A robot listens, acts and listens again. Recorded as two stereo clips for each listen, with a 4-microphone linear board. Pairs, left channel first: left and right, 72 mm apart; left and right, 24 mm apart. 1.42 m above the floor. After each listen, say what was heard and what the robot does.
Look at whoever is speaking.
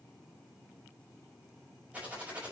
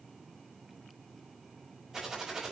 Keep listening.
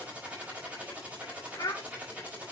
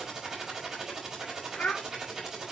The child speaking: about 55° left or 125° left. Turn 55° left.
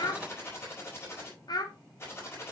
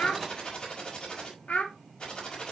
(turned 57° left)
So it is at 70° left. Turn 70° left.
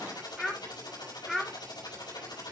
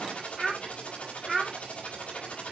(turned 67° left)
Found it: a child speaking, straight ahead.